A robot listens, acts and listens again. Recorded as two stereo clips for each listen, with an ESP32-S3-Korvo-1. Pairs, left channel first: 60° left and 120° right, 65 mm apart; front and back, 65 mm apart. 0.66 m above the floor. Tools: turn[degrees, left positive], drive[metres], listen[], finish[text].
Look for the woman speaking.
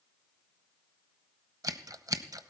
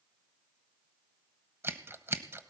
Action: listen[]
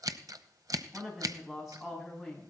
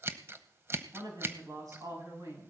Thought: The woman speaking: 150° left.
Action: turn[150]
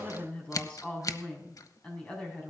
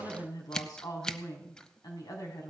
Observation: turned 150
Thought: The woman speaking is now 10° right.
Action: turn[-10]
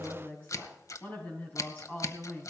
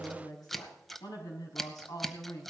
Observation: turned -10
Action: finish[Found it: a woman speaking, straight ahead, over 4 m away.]